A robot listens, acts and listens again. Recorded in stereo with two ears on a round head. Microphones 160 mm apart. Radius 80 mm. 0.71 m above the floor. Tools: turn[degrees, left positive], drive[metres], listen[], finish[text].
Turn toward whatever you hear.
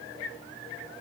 Action: listen[]
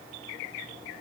Action: listen[]
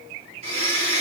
Thought: The blender: about 35° right or 145° right.
Action: turn[-35]
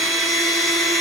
Action: finish[Facing the blender, 2 to 4 m away.]